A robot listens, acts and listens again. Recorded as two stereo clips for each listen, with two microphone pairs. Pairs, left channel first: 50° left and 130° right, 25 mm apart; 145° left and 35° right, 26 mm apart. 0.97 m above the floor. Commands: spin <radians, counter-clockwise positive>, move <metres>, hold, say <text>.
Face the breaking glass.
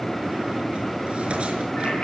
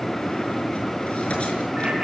hold
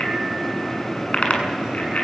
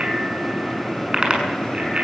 hold
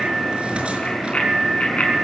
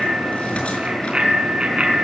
say I can't make out breaking glass, only a bicycle bell.